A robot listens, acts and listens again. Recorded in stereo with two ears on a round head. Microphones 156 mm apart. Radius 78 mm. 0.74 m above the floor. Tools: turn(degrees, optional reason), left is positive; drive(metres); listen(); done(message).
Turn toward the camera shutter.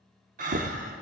listen()
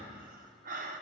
listen()
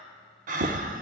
done("I can't make out a camera shutter, only breathing.")